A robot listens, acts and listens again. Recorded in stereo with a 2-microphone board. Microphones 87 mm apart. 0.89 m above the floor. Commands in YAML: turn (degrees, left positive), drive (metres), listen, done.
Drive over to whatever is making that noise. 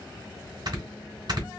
turn: -50
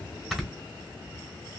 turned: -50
drive: 1.0
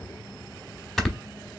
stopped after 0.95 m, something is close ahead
done: "I am next to the snoring."